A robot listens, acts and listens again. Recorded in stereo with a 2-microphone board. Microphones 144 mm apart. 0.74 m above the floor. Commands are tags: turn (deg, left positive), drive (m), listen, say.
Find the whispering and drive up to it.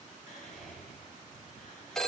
<turn deg="70"/>
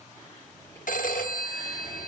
<turn deg="25"/>
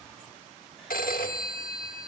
<listen/>
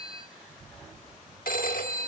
<drive m="1.0"/>
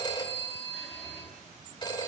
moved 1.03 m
<listen/>
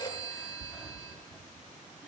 <drive m="1.0"/>
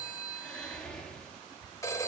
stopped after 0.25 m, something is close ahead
<turn deg="10"/>
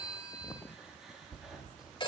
<say>I am next to the whispering.</say>